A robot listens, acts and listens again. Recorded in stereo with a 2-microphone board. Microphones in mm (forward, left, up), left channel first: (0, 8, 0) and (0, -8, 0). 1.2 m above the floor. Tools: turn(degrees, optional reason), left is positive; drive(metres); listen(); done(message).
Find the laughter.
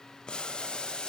listen()
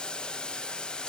listen()
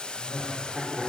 turn(degrees=-45, reason="The laughter: about 45° right or 135° right.")
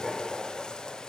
done("Facing the laughter, over 4 m away.")